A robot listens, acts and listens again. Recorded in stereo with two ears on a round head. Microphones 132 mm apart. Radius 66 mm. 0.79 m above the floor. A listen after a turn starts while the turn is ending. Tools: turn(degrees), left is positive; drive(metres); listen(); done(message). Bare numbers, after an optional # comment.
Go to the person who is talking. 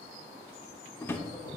listen()
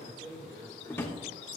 # The man speaking: about 65° right or 115° right.
turn(-65)
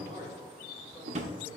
listen()
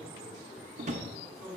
drive(1.0)
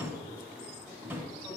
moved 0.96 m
listen()
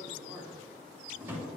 # The man speaking is now 15° right.
turn(-15)
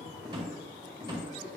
drive(1.0)
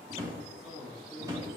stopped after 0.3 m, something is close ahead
done("Arrived at the man speaking, straight ahead.")